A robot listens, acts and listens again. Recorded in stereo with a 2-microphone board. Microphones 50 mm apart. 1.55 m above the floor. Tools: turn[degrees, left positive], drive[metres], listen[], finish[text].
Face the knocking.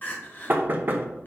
Thought: The knocking: about 40° right or 140° right.
Action: turn[-40]
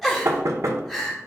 Thought: So it is at 100° right.
Action: turn[-100]
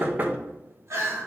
Thought: The knocking is now 35° right.
Action: turn[-35]
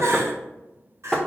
Action: finish[Found it: knocking, straight ahead.]